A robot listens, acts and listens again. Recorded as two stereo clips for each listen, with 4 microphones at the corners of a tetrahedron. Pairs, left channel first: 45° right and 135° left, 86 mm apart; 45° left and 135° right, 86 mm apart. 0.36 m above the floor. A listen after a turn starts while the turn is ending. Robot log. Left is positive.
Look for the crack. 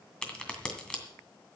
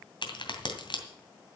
note: The crack: 35° left.
cmd yaw +35
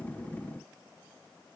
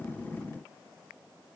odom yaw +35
end: I heard a crack from this way, but can't make it out now.